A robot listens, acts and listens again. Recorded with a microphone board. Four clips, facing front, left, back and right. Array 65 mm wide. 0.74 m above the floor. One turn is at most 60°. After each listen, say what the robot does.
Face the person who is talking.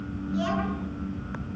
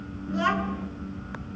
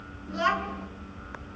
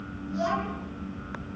Turn 60° left.
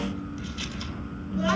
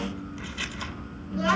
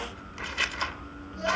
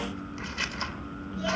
Turn 60° left.
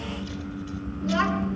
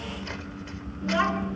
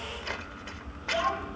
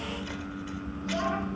Turn 45° left.
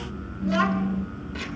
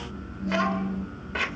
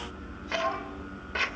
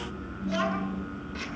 Turn 10° left.
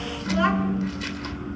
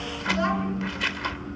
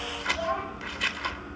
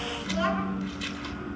Found it: a child speaking, straight ahead.